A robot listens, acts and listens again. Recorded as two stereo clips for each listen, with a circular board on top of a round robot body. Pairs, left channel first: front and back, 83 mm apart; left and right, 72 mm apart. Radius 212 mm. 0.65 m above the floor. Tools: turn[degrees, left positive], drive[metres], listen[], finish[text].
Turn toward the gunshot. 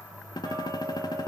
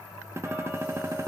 Thought: The gunshot: 40° right.
Action: turn[-40]
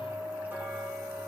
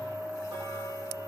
Action: finish[Facing where the gunshot came from. I can't hear it now.]